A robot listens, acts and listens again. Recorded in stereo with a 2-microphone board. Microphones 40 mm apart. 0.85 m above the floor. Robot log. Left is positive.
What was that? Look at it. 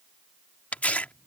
note: The tearing paper: about 40° left or 140° left.
cmd yaw +40
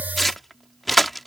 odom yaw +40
end: Facing the tearing paper.